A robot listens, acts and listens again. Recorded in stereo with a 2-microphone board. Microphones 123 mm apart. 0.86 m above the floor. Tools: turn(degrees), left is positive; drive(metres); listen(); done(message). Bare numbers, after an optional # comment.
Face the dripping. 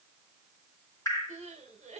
# The dripping: about 25° left or 155° left.
turn(25)
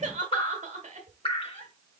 # So it is at 125° left.
turn(125)
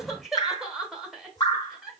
# The dripping is now 35° left.
turn(35)
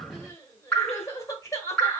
# The dripping is now 10° left.
turn(10)
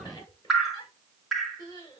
done("Found it: dripping, straight ahead.")